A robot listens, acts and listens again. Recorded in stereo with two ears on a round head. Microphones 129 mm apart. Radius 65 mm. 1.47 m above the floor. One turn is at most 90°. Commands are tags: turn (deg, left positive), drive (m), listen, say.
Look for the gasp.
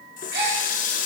<turn deg="-70"/>
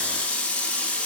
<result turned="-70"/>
<listen/>
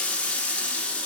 <say>I heard a gasp, but can't make it out now. It was about straight ahead or 40° right.</say>